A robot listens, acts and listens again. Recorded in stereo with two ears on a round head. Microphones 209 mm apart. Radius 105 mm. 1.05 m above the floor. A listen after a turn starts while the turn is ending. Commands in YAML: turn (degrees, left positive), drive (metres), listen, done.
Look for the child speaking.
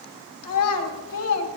turn: 75
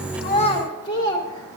turn: 20
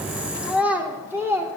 turn: -15
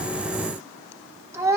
turn: -15
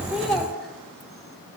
done: "Found it: a child speaking, straight ahead, 2 to 4 m away."